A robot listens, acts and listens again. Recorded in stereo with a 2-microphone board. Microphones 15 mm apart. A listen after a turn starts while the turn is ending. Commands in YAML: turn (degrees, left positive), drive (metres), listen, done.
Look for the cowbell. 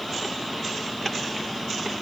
listen: true
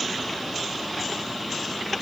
listen: true
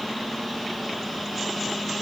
done: "I can't make out a cowbell to turn to."